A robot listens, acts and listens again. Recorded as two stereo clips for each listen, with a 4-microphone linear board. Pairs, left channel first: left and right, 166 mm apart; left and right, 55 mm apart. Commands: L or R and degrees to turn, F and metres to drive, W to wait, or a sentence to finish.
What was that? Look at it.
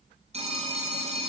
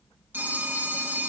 R40
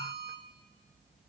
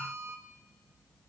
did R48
W
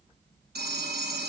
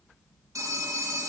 R95
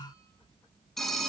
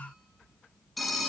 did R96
Found it: a phone ringing, straight ahead.